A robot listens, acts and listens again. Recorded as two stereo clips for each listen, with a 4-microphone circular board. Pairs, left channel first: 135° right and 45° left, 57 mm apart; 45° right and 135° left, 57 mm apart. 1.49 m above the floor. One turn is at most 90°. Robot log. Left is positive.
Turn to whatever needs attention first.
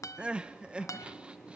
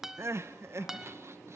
note: The crying: 115° left.
cmd yaw +90
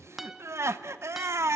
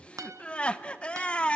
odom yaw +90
note: The crying is now 25° left.
cmd yaw +25
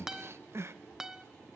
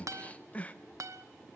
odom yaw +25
note: The crying is now 20° left.
cmd yaw +20
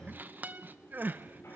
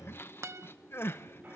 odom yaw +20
end: Facing the crying.